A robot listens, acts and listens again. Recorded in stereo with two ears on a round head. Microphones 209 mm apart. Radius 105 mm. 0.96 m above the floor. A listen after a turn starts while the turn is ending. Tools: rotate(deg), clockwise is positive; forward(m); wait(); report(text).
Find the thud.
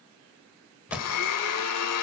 rotate(30)
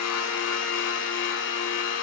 wait()
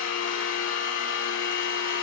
report("I heard a thud, but can't make it out now. It was about 25° left or 145° right.")